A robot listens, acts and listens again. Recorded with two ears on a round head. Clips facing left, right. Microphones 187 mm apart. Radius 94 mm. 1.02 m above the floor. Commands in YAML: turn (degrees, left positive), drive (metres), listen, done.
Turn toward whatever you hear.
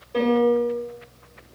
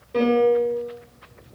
turn: -25
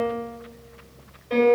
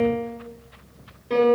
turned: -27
turn: -125
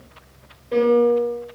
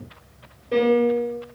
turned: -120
turn: -10
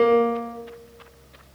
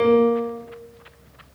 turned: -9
done: "Found it: a piano, straight ahead, 2 to 4 m away."